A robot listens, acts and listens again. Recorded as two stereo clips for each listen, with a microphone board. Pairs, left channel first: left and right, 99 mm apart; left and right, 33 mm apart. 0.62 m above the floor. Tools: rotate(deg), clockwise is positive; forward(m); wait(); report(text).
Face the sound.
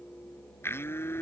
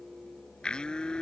rotate(-25)
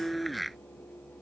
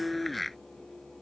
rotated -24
report("Facing the blender.")